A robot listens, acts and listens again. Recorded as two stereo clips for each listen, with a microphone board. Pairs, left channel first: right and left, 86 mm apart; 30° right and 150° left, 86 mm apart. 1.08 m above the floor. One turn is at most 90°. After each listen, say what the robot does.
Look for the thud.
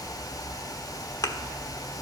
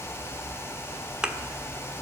Turn 90° right.
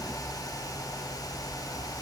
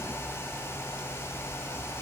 Turn 40° right.
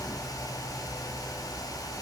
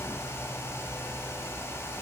Facing where the thud came from. I can't hear it now.